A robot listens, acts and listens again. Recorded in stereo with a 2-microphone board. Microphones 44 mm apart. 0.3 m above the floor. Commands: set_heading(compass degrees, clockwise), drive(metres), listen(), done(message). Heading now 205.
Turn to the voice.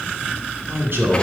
set_heading(265)
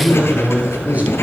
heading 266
set_heading(311)
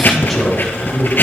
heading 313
done("Facing the man speaking.")